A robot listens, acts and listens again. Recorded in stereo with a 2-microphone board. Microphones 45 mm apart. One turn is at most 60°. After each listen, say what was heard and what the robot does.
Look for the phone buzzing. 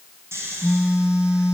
The phone buzzing: about 15° right or 165° right. Turn 15° right.
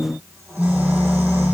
So it is at 150° right. Turn 60° right.
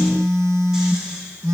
The phone buzzing is now 70° right. Turn 60° right.
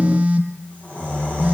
The phone buzzing is now 30° right. Turn 30° right.
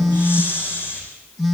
Found it: a phone buzzing, straight ahead, 1 to 2 m away.